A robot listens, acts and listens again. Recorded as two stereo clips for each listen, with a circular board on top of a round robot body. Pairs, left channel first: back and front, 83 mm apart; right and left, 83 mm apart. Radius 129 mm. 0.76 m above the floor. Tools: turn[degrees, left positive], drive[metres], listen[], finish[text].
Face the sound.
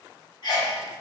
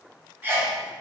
Thought: The sneeze: 155° left.
Action: turn[155]
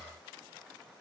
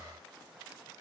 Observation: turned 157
Action: finish[Facing where the sneeze came from. I can't hear it now.]